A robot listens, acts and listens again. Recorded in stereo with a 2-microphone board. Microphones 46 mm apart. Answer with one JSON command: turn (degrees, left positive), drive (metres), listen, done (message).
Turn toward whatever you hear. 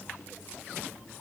{"listen": true}
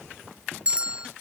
{"turn": -25}
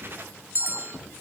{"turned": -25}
{"turn": -130}
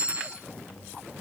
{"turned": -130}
{"turn": -25}
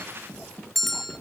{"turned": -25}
{"done": "Facing the bell, under 1 m away."}